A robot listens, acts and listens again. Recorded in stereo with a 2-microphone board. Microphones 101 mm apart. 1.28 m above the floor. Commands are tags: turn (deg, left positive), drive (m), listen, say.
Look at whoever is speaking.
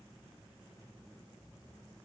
<listen/>
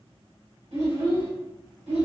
<turn deg="-90"/>
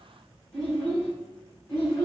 <turn deg="10"/>
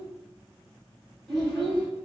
<say>Found it: a child speaking, straight ahead, 1 to 2 m away.</say>